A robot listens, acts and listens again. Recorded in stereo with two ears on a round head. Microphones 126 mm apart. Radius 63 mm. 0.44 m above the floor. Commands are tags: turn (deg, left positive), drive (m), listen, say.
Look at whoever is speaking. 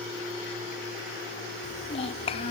<turn deg="40"/>
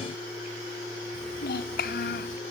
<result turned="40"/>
<turn deg="100"/>
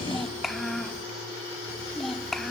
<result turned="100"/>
<say>Facing the child speaking, 1 to 2 m away.</say>